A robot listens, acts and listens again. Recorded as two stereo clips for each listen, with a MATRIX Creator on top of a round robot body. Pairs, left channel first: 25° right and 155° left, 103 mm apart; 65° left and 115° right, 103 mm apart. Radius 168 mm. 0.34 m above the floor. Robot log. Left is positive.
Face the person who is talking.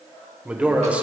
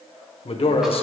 note: The man speaking: 80° left.
cmd yaw +80
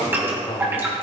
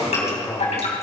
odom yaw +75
end: Facing the man speaking, 1 to 2 m away.